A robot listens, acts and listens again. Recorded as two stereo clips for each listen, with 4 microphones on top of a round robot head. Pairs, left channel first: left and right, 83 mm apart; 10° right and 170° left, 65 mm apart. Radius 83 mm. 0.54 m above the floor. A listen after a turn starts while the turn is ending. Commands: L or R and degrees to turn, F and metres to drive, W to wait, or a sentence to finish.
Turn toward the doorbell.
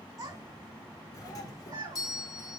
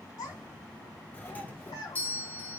L50
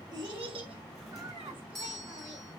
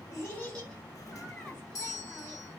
Found it: a doorbell, straight ahead, 1 to 2 m away.